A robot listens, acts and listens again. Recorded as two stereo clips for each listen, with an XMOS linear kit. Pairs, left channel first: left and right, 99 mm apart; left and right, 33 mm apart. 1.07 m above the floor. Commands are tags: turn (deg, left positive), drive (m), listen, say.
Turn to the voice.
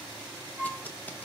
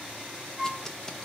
<listen/>
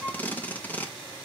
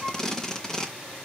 <listen/>
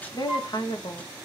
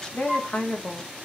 <turn deg="45"/>
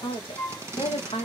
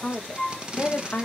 <turn deg="90"/>
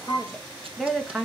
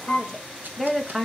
<say>Facing the woman speaking, 1 to 2 m away.</say>